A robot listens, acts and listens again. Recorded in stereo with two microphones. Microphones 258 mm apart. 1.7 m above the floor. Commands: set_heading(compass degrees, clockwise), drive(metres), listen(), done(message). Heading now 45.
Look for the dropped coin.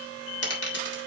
set_heading(340)
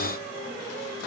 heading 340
listen()
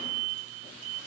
done("I heard a dropped coin, but can't make it out now. It was about straight ahead or 50° left.")